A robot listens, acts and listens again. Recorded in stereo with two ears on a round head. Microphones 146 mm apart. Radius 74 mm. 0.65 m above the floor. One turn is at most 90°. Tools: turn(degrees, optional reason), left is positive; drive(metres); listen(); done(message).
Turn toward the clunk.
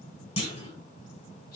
turn(degrees=40, reason="The clunk: about 40° left or 140° left.")
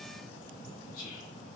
listen()
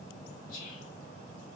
done("I heard a clunk, but can't make it out now. It was about straight ahead or 100° left.")